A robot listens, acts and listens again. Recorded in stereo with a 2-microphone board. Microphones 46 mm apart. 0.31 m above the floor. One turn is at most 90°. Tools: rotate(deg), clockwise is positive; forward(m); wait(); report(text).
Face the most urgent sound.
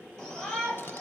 rotate(-30)
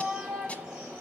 rotate(20)
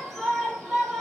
report("Facing the shout, over 4 m away.")